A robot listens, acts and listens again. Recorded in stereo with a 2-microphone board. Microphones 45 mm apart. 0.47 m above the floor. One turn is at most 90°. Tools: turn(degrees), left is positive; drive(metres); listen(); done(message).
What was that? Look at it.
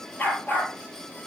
turn(degrees=35)
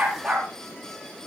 done("Found it: a dog barking, straight ahead.")